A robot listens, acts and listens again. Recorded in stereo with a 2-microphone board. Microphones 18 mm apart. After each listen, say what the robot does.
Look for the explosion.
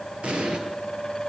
Turn 60° right.
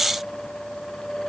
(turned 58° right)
Keep listening.
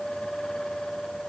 I heard an explosion, but can't make it out now. It was about straight ahead or 60° right.